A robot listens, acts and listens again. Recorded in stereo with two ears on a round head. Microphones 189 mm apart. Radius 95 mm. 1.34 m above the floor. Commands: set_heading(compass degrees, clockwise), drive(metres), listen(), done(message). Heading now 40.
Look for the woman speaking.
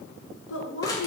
set_heading(335)
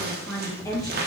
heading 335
set_heading(315)
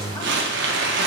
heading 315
listen()
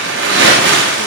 listen()
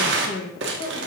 set_heading(260)
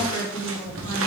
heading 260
set_heading(235)
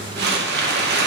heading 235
listen()
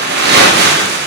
listen()
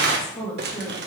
done("Found it: a woman speaking, straight ahead, 2 to 4 m away.")